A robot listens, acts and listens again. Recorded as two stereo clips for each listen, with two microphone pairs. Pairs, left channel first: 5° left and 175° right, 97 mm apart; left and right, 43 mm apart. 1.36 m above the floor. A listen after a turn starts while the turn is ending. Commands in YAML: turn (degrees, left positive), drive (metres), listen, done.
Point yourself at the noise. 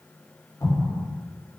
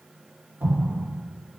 turn: -55
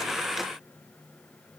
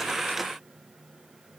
done: "I heard an explosion from this way, but can't make it out now."